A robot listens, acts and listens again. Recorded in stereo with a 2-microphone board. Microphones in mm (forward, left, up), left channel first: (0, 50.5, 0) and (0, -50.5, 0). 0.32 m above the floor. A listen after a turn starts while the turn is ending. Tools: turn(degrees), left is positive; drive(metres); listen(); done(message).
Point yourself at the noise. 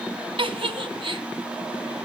turn(degrees=-65)
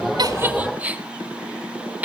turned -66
turn(degrees=-20)
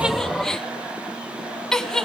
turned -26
done("Facing the giggle.")